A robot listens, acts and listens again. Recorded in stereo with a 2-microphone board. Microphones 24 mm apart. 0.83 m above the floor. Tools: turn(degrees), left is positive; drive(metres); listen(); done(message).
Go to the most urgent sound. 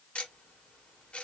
listen()
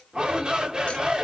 turn(degrees=-35)
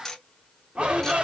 turn(degrees=-110)
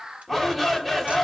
drive(metres=1.0)
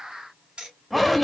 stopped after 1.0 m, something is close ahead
done("I am next to the shout.")